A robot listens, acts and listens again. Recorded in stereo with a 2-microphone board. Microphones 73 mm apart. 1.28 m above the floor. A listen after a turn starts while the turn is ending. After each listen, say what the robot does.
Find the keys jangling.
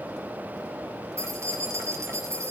Turn 45° right.
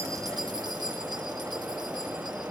Keep listening.
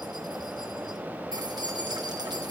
Turn 90° right.
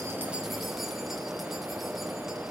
Keep listening.
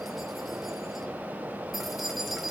Found it: keys jangling, straight ahead, over 4 m away.